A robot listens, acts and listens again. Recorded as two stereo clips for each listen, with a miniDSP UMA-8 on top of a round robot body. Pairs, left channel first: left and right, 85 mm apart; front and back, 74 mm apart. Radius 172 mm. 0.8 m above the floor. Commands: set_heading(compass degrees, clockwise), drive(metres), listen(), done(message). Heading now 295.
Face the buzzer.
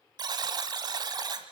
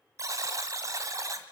set_heading(65)
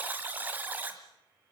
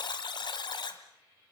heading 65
set_heading(85)
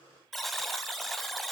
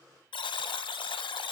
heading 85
done("Facing the buzzer, 1 to 2 m away.")